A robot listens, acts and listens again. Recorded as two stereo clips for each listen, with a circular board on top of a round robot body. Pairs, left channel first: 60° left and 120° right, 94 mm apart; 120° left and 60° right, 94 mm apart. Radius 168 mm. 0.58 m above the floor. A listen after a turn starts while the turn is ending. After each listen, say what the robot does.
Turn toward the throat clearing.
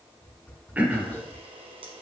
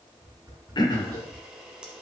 Turn 165° left.
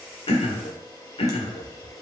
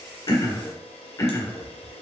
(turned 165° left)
Turn 60° left.
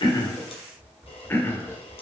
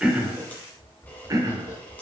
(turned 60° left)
Found it: throat clearing, straight ahead.